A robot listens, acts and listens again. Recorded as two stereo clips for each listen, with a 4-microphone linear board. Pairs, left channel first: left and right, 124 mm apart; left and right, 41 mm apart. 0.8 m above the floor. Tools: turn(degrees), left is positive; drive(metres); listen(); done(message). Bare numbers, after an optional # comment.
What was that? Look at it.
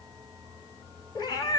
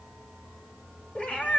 # The cat meowing: about 35° left or 145° left.
turn(35)
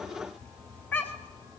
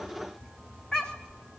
# So it is at 15° left.
turn(15)
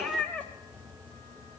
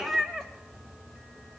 # The cat meowing is now 10° left.
turn(10)
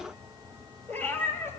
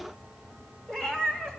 # The cat meowing is now 20° left.
turn(20)
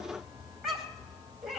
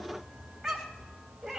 done("Facing the cat meowing.")